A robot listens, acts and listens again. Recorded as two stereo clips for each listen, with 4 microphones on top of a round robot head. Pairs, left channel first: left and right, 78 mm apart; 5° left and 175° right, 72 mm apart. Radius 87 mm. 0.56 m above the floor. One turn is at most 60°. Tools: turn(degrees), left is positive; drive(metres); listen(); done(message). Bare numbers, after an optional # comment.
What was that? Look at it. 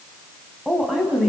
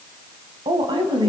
# The woman speaking: 175° right.
turn(-60)
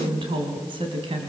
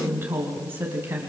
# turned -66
# The woman speaking is now 110° right.
turn(-60)
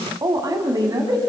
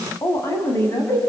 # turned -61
# The woman speaking is now 50° right.
turn(-50)
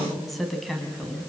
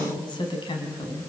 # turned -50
done("Found it: a woman speaking, straight ahead.")